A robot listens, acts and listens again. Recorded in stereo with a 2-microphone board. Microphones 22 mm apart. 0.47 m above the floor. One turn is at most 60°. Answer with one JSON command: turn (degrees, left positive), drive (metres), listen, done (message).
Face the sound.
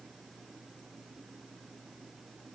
{"listen": true}
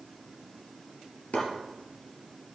{"turn": 60}
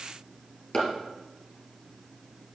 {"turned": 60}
{"turn": 30}
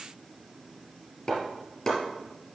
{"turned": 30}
{"turn": 25}
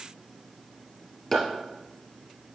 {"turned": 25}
{"turn": 10}
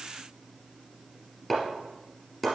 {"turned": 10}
{"done": "Found it: chopping, straight ahead, 2 to 4 m away."}